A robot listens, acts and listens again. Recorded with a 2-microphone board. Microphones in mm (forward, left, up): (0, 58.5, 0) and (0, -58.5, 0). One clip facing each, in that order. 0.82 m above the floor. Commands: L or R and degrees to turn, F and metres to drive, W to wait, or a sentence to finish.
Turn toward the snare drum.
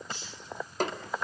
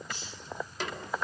L45
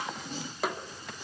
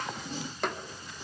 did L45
Facing the snare drum, 2 to 4 m away.